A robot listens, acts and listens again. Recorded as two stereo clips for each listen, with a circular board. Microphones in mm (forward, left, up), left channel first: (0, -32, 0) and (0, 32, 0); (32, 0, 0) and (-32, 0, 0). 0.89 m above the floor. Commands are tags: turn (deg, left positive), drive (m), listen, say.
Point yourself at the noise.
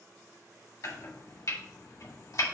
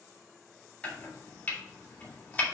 <turn deg="-65"/>
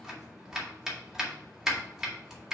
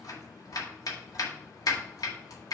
<say>Facing the chopping.</say>